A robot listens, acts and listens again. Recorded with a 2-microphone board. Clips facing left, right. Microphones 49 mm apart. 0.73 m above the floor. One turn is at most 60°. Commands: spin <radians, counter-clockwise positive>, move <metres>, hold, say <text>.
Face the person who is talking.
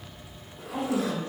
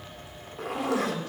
spin 0.52
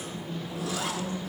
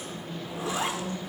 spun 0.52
spin 0.44
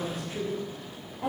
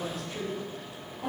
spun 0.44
spin 0.44
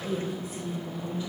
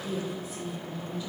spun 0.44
spin 0.35
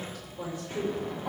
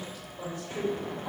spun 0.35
say Found it: a woman speaking, straight ahead.